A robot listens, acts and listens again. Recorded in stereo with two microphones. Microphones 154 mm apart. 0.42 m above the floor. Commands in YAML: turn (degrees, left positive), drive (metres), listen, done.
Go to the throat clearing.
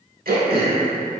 turn: -90
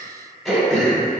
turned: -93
drive: 1.0
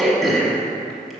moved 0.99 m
drive: 1.0
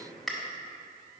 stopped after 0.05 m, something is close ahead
done: "I am next to the throat clearing."